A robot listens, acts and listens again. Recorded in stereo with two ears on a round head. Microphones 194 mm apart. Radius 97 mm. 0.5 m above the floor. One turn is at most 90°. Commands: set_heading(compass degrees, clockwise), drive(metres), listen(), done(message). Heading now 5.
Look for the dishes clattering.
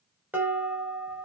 set_heading(35)
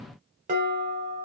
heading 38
set_heading(128)
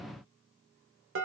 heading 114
set_heading(174)
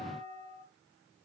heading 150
set_heading(175)
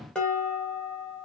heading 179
done("Found it: dishes clattering, straight ahead.")